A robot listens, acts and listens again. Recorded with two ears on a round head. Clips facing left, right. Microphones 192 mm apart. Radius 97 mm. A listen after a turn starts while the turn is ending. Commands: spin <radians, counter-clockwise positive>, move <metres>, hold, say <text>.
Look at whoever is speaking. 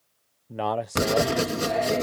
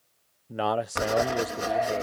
spin -0.52
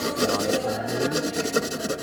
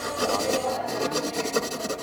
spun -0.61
hold
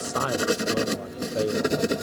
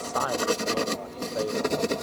spin 0.52
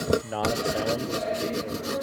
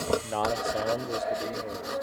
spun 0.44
say Found it: a man speaking, straight ahead.